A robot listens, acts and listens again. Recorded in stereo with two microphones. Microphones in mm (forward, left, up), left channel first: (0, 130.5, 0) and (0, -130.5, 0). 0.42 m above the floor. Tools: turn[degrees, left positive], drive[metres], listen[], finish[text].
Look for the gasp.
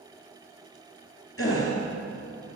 Thought: The gasp: about 55° left or 125° left.
Action: turn[55]
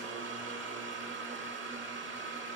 Action: listen[]
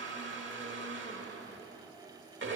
Action: finish[I heard a gasp, but can't make it out now. It was about straight ahead or 70° left.]